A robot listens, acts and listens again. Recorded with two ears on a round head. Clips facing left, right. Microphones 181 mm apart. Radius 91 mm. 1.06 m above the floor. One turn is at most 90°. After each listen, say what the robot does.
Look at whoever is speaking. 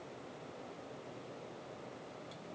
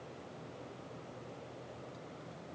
Keep listening.
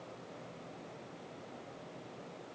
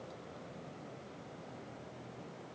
Keep listening.
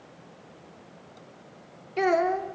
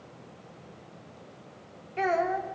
Turn 55° left.
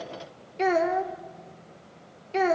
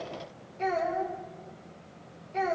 Turn 75° left.
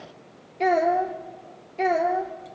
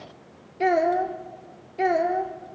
Found it: a child speaking, straight ahead.